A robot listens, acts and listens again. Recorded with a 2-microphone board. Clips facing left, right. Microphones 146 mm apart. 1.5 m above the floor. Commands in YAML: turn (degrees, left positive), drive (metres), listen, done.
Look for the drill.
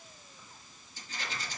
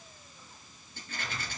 listen: true
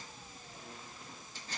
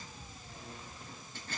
listen: true
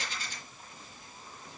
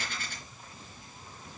done: "I can't make out a drill, only a rattle."